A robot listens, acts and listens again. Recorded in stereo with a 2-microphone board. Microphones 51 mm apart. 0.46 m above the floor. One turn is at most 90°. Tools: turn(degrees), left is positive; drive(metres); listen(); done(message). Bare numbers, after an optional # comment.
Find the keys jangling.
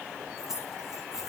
turn(-30)
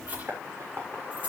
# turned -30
# So it is at 150° right.
turn(-90)
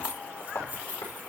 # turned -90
# The keys jangling is now 30° right.
turn(-30)
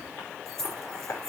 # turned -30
done("Facing the keys jangling.")